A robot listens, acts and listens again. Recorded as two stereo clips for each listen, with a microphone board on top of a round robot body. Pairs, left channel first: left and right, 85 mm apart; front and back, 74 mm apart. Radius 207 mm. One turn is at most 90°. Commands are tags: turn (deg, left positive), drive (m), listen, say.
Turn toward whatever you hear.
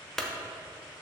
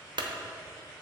<turn deg="90"/>
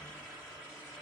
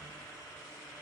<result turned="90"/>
<turn deg="85"/>
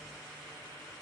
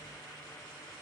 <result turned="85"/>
<say>Facing where the clunk came from. I can't hear it now.</say>